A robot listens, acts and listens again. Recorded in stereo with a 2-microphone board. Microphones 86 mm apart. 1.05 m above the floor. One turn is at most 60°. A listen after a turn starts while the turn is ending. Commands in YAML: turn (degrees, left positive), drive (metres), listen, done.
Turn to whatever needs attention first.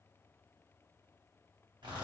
listen: true
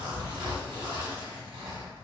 listen: true
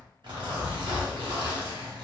done: "I can't make out anything urgent, only a zipper."